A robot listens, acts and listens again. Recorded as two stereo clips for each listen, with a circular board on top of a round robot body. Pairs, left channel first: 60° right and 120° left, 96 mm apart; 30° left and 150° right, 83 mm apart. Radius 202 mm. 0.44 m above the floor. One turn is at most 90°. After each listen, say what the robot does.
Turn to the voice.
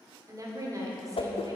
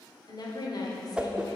Turn 65° left.
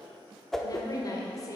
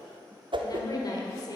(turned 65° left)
Turn 10° right.
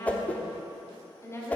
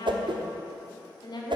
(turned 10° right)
Found it: a woman speaking, straight ahead.